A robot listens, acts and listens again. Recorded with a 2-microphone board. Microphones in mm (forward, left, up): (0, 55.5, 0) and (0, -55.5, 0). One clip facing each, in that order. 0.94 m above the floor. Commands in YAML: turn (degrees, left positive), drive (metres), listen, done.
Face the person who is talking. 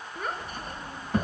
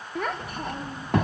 turn: -75
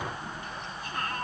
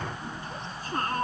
turn: -30
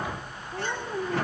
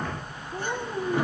done: "Found it: a child speaking, straight ahead."